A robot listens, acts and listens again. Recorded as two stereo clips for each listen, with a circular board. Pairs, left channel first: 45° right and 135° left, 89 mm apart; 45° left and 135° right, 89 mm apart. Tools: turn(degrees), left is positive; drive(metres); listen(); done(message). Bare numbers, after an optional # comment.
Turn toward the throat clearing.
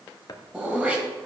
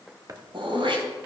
# The throat clearing: 150° right.
turn(-150)
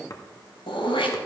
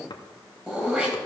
# The throat clearing is now 55° right.
turn(-55)
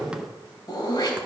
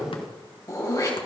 done("Found it: throat clearing, straight ahead, 2 to 4 m away.")